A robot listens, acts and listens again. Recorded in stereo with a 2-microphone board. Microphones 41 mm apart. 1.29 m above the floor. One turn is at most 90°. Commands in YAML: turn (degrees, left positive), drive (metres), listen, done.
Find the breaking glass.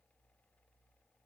listen: true
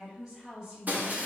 turn: -40
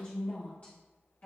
listen: true
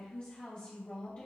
done: "I heard breaking glass, but can't make it out now. It was about straight ahead or 100° right."